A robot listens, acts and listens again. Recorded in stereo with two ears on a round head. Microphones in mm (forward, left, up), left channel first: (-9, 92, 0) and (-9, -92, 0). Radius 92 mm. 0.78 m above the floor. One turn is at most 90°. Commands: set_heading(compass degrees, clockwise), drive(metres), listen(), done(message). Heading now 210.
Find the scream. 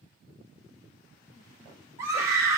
set_heading(240)
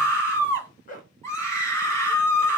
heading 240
set_heading(225)
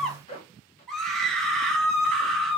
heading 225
done("Found it: a scream, straight ahead, 1 to 2 m away.")